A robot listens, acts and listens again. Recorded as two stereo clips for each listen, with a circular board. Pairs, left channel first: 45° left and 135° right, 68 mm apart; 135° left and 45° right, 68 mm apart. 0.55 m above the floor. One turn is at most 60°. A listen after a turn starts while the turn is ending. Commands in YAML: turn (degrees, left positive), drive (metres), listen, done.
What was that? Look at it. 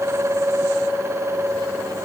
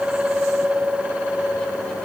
listen: true
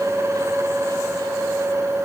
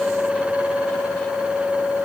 listen: true
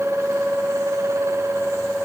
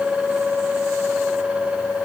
done: "I can't make out anything."